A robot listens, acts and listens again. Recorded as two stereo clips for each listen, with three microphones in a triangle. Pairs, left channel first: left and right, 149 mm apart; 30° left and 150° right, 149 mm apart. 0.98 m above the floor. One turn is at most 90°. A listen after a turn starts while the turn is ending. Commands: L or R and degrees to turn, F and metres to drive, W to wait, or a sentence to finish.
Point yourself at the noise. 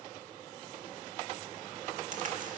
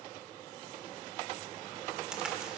R65
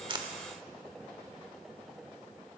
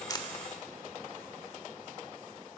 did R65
I heard a crack from this way, but can't make it out now.